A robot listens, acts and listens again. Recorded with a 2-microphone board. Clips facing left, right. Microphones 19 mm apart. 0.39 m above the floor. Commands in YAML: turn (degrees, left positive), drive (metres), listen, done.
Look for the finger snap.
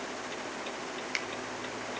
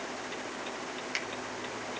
turn: 30
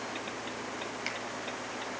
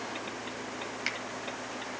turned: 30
turn: -25
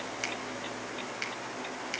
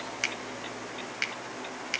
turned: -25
turn: -30
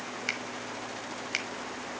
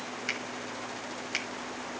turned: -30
turn: 10
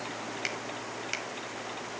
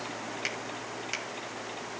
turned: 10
done: "Facing the finger snap, 1 to 2 m away."